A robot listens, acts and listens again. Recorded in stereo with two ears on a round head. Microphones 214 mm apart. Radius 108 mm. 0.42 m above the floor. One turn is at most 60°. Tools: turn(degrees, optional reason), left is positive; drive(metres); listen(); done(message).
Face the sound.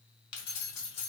turn(degrees=60, reason="The keys jangling: about 70° left or 110° left.")
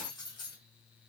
turn(degrees=20, reason="So it is at 20° left.")
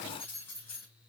turn(degrees=10, reason="The keys jangling is now 10° left.")
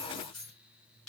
done("Facing the keys jangling.")